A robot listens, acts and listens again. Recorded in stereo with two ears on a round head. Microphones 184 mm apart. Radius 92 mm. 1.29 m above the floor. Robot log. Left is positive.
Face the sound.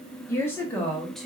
cmd yaw +30
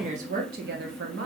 note: So it is at 65° right.
cmd yaw -65
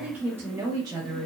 note: The woman speaking is now 25° right.
cmd yaw -25
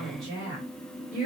end: Facing the woman speaking.